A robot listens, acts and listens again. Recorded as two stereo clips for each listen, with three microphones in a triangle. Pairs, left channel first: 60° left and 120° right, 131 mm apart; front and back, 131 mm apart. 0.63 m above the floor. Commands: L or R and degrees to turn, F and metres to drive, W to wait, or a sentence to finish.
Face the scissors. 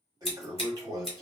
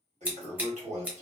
L100
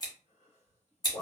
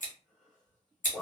Facing the scissors.